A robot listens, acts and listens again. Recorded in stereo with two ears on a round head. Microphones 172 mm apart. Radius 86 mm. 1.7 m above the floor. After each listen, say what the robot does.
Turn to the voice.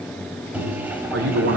Turn 90° right.
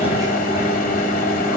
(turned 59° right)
Turn 30° right.
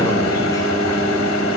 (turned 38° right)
Keep listening.
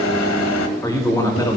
Turn 20° left.
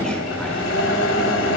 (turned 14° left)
Keep listening.
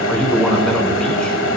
Found it: a man speaking, straight ahead.